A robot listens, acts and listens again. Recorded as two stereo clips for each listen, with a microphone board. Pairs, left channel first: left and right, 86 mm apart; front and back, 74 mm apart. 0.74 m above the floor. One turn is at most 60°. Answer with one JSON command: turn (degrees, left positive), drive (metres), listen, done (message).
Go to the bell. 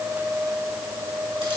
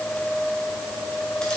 {"listen": true}
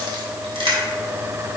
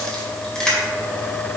{"listen": true}
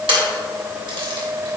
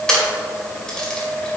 {"done": "I can't make out a bell to turn to."}